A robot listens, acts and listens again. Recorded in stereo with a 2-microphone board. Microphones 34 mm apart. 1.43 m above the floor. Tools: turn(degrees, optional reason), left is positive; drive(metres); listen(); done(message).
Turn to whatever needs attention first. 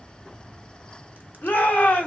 turn(degrees=90)
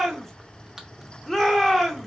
done("Found it: a shout, straight ahead, 1 to 2 m away.")